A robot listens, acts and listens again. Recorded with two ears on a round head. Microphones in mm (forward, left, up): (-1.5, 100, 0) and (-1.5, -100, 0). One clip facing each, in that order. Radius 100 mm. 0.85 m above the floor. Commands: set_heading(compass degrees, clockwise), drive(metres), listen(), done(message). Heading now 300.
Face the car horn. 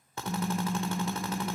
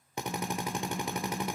set_heading(245)
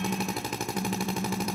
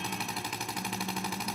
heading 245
set_heading(175)
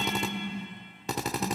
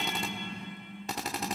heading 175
done("Facing the car horn, 2 to 4 m away.")